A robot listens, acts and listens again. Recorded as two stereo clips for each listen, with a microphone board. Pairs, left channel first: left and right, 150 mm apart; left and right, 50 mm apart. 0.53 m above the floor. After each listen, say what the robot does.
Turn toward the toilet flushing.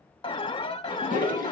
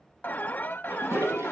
Turn 75° right.
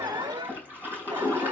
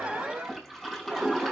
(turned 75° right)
Turn 15° right.
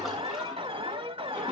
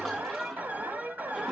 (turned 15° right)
Keep listening.
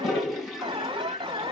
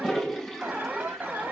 Facing the toilet flushing, over 4 m away.